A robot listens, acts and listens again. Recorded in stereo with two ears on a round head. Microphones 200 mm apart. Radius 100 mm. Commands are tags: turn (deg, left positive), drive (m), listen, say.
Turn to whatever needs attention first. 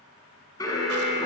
<turn deg="15"/>
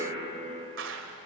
<say>Facing the alarm, over 4 m away.</say>